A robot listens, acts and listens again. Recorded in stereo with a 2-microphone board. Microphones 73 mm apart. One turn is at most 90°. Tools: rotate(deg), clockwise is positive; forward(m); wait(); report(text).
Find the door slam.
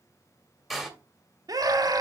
rotate(30)
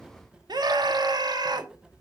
wait()
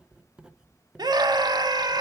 report("I heard a door slam, but can't make it out now. It was about 25° left or 145° right.")